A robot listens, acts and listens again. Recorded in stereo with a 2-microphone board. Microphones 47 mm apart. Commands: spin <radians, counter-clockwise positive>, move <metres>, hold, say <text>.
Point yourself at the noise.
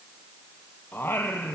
spin 1.05
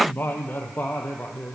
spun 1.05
spin 0.61
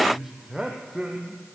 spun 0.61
spin -0.17
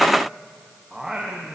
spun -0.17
spin -0.17
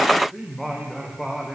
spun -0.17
say Facing the singing, 2 to 4 m away.